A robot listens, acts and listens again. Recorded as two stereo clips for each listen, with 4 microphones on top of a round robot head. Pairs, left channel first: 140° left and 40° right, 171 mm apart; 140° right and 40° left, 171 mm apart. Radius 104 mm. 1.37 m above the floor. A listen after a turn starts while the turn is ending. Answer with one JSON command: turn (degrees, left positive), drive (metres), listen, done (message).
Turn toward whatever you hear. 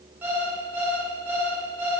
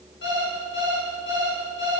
{"turn": -120}
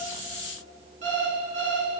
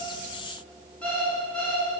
{"turn": -55}
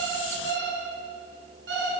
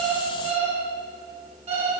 {"turn": -15}
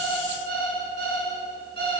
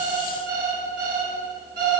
{"done": "Facing the alarm clock."}